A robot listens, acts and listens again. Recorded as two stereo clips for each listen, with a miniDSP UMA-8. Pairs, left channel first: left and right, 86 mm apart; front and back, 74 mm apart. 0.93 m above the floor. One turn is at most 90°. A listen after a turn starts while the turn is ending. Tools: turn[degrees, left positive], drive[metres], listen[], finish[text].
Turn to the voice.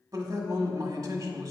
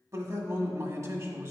Thought: The man speaking: 135° right.
Action: turn[-90]
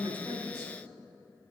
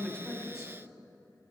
Thought: The man speaking is now 50° right.
Action: turn[-50]
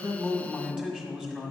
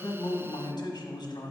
Thought: The man speaking is now 10° right.
Action: turn[-10]
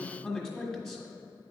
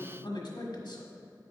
Action: finish[Facing the man speaking, 1 to 2 m away.]